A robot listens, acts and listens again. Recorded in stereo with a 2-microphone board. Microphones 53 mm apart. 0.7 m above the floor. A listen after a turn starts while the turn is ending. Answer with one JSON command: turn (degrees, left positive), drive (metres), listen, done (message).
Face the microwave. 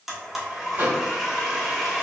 {"turn": -35}
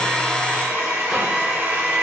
{"listen": true}
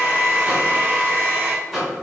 {"done": "Facing the microwave, 1 to 2 m away."}